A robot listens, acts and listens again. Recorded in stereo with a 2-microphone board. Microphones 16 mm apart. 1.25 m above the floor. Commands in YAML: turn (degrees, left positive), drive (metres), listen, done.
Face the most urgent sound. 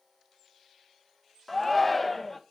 turn: 30
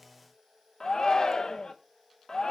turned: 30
turn: 140
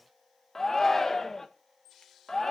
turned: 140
turn: 25
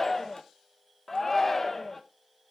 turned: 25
turn: 20
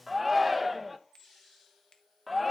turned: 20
done: "Found it: a shout, straight ahead."